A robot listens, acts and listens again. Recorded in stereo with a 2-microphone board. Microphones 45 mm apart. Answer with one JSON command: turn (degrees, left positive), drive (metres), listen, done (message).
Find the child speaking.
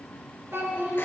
{"turn": -90}
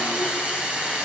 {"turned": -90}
{"listen": true}
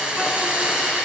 {"listen": true}
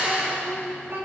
{"turn": -60}
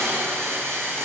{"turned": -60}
{"listen": true}
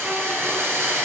{"listen": true}
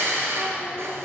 {"done": "Facing where the child speaking came from. I can't hear it now."}